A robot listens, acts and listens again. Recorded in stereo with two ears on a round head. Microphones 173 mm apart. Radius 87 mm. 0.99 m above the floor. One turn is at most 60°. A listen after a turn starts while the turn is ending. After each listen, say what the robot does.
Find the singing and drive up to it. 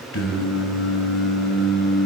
Turn 60° left.
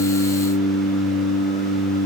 Turn 45° left.
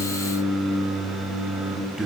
Drive 1.0 m forward.
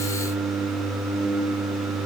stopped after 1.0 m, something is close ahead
Turn 10° right.
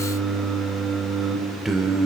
Arrived at the singing, straight ahead.